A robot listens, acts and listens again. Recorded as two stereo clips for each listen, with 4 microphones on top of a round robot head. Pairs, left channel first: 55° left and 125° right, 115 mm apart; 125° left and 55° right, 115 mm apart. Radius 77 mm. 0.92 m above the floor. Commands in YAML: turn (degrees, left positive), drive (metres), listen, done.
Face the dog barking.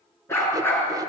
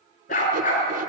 turn: 130
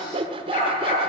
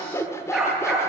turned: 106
turn: 30
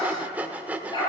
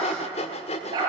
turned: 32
done: "Facing the dog barking, over 4 m away."